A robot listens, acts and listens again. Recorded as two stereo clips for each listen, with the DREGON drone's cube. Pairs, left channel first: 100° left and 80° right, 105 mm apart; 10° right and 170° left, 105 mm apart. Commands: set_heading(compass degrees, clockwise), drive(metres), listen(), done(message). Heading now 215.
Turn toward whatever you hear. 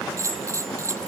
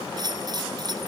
set_heading(355)
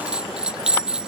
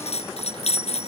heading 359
done("Facing the bell.")